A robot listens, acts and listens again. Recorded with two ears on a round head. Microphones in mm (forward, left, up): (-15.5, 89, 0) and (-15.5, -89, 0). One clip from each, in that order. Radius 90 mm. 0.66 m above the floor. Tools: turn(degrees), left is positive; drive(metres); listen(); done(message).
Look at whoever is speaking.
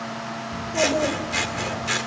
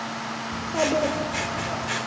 turn(degrees=-65)
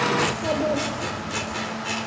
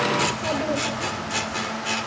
done("Facing the child speaking.")